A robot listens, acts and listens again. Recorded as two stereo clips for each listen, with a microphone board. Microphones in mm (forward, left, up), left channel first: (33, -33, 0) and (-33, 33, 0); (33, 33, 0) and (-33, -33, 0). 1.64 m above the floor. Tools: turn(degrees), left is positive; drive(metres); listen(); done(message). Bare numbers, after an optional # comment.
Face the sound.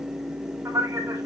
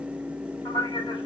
# The man speaking: 80° left.
turn(80)
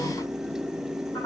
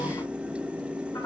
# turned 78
listen()
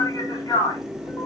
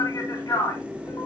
done("Found it: a man speaking, straight ahead, over 4 m away.")